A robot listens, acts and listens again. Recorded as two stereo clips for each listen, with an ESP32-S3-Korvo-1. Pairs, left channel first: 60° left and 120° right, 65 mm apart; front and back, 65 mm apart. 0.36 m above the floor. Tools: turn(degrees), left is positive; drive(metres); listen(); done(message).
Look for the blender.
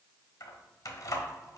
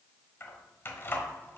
listen()
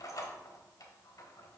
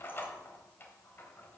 listen()
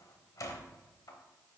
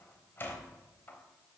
done("I can't make out a blender to turn to.")